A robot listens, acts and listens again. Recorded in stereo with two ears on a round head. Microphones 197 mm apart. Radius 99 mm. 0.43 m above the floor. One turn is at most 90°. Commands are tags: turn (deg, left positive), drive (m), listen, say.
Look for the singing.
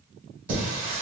<turn deg="-35"/>
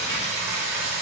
<turn deg="-40"/>
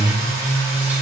<say>Found it: singing, straight ahead, 1 to 2 m away.</say>